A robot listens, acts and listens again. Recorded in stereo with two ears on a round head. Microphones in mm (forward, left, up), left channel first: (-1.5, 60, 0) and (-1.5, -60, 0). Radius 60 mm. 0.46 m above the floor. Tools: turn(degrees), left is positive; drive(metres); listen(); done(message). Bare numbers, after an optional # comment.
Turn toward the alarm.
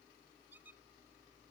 listen()
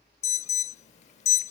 # The alarm: about 55° left or 125° left.
turn(55)
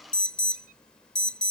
done("Facing the alarm.")